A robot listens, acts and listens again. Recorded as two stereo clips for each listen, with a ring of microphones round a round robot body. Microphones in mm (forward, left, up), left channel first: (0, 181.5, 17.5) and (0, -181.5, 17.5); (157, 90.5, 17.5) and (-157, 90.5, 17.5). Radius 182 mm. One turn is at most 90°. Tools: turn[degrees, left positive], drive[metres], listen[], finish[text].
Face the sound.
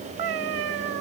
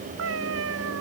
Thought: The cat meowing: 125° right.
Action: turn[-90]
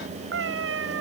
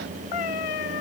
Thought: The cat meowing is now 35° right.
Action: turn[-35]
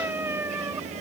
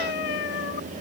Action: finish[Facing the cat meowing.]